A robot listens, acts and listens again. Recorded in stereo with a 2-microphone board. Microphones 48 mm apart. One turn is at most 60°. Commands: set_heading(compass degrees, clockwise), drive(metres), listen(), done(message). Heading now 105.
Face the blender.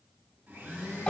set_heading(160)
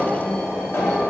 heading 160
listen()
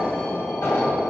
listen()
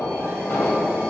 done("I heard a blender, but can't make it out now. It was about straight ahead or 70° right.")